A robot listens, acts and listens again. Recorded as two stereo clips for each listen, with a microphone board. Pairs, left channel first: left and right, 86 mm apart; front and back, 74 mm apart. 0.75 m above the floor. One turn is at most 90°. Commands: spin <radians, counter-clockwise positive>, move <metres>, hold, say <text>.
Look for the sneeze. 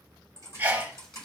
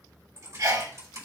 spin -1.57
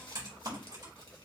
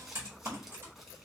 spin -1.13
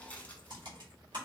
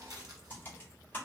say Facing where the sneeze came from. I can't hear it now.